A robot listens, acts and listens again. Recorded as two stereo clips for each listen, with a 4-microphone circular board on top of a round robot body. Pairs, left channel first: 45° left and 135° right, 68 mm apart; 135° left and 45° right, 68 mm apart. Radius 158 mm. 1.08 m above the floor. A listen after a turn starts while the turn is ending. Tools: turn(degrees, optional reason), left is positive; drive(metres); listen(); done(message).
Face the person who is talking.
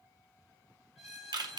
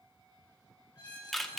listen()
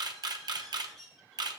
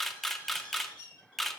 listen()
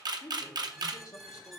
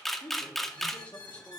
turn(degrees=65, reason="The man speaking: 65° left.")
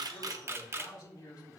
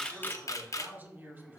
turn(degrees=15, reason="The man speaking is now 15° left.")
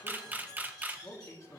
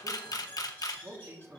done("Found it: a man speaking, straight ahead.")